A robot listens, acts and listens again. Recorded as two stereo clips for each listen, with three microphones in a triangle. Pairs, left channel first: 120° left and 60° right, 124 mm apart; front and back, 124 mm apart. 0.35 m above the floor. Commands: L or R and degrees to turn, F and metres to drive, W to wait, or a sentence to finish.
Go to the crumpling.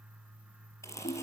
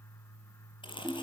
L50
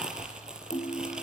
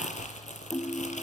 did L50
L25
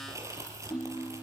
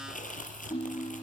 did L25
F1.0
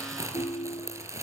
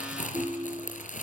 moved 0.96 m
L10
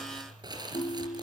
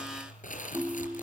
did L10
F1.0
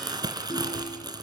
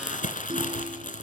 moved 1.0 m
F1.0
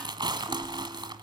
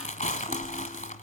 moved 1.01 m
F1.0
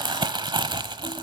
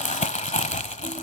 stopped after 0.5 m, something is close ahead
R10
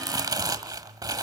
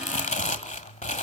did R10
Arrived at the crumpling, straight ahead.